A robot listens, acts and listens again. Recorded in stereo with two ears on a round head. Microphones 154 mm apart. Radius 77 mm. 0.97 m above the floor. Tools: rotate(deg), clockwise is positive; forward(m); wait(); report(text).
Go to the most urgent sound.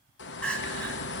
rotate(-30)
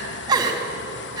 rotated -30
rotate(25)
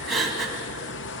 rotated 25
forward(1.0)
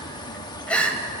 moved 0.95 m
rotate(-10)
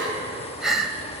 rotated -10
forward(1.0)
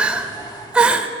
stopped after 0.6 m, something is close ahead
report("I am next to the crying.")